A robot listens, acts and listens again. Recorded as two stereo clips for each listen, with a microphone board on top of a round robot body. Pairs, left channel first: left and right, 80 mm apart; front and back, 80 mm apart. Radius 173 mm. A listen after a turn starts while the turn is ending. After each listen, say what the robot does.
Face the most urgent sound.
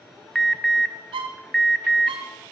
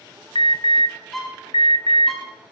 Facing the alarm, under 1 m away.